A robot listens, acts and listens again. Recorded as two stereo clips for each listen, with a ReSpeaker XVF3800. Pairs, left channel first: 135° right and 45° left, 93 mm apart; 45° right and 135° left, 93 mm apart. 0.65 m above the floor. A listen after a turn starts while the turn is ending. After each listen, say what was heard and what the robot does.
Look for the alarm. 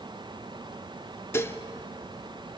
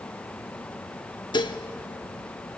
Keep listening.
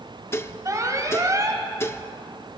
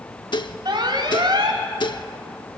The alarm: 100° left. Turn 100° left.
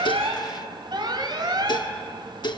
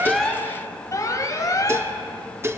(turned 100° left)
The alarm is now 10° left. Turn 10° left.
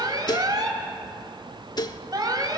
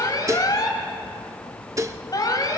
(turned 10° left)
Facing the alarm.